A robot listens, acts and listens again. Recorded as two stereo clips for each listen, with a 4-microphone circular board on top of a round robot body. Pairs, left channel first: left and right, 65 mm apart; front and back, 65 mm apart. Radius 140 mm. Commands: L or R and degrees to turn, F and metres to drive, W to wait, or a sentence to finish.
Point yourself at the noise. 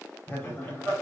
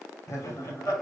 L35
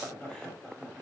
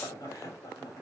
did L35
L15
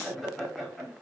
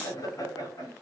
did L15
Facing the laughter, 2 to 4 m away.